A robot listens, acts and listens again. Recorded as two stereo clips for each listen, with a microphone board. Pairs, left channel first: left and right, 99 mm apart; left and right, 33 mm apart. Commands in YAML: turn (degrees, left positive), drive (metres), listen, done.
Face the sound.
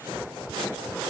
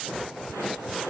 listen: true
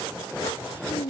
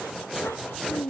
turn: 70
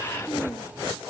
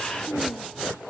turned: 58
turn: 10
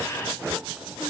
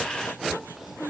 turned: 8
listen: true
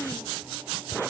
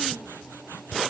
listen: true
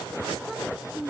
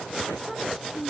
done: "Facing the child speaking."